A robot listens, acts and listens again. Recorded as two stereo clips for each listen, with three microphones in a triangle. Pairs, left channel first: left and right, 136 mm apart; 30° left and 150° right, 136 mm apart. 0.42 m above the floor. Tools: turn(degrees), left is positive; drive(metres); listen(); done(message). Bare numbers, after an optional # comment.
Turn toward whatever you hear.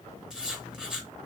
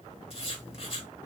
done("Found it: writing, straight ahead, 1 to 2 m away.")